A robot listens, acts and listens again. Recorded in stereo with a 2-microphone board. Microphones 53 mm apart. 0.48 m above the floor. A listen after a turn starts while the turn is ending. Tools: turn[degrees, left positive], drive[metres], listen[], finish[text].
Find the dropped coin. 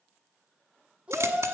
Thought: The dropped coin: about 75° right or 105° right.
Action: turn[-75]
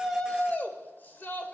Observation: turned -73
Action: listen[]
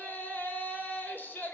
Action: finish[I heard a dropped coin, but can't make it out now. It was about straight ahead or 35° right.]